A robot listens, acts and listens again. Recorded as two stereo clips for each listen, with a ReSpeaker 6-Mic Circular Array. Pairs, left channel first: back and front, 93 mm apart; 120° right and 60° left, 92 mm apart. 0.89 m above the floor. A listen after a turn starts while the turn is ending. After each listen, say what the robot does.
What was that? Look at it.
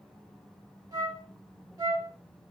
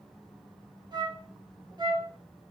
Turn 35° left.
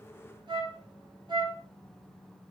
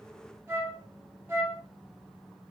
Found it: a flute, straight ahead.